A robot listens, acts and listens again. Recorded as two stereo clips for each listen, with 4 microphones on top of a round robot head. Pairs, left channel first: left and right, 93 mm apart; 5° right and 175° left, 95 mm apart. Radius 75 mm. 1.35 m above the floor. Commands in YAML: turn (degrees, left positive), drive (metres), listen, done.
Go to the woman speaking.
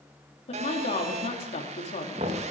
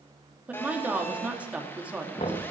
turn: 95
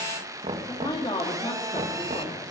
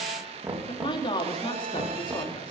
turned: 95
turn: 30
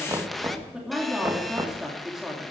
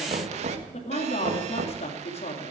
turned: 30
drive: 1.0
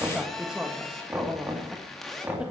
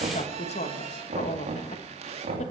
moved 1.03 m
turn: -10
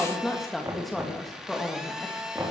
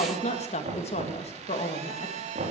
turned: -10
drive: 1.0
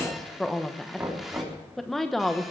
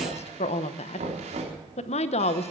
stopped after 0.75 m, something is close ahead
done: "Arrived at the woman speaking, straight ahead."